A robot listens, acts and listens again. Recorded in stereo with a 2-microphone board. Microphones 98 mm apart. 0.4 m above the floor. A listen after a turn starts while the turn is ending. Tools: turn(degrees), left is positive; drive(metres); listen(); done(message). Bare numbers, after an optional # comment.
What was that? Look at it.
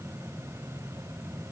listen()
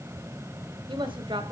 # The woman speaking: about 55° right or 125° right.
turn(-55)
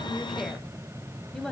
done("Found it: a woman speaking, straight ahead.")